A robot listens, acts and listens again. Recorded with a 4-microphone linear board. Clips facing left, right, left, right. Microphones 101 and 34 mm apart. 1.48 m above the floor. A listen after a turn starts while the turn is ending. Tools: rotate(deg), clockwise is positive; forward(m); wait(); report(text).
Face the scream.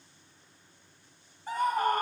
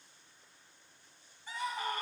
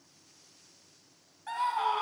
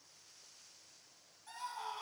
rotate(-50)
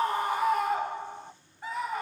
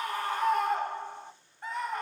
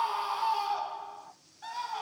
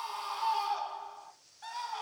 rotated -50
report("Found it: a scream, straight ahead.")